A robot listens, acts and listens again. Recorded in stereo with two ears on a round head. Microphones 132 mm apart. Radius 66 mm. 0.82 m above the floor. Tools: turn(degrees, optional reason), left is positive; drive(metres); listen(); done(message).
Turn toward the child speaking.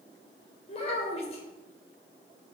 turn(degrees=45, reason="The child speaking: about 45° left or 135° left.")
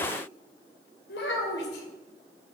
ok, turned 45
turn(degrees=90, reason="So it is at 90° left.")
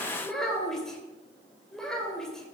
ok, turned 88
done("Facing the child speaking, 2 to 4 m away.")